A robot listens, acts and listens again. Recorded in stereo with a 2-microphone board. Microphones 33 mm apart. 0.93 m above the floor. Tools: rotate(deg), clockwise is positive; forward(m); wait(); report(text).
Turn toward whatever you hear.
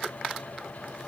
wait()
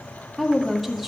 rotate(-30)
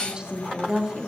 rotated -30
rotate(30)
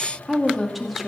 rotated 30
report("Found it: a woman speaking, straight ahead, 2 to 4 m away.")